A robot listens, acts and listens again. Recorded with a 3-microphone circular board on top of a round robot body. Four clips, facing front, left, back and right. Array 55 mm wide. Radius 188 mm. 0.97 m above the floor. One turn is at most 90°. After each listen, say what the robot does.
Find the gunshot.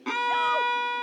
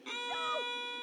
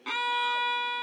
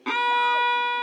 Keep listening.
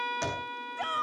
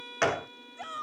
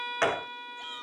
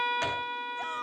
Turn 90° left.
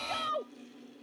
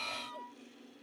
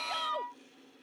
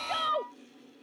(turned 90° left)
Turn 45° left.
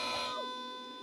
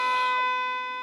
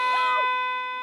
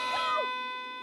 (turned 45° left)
I heard a gunshot from this way, but can't make it out now.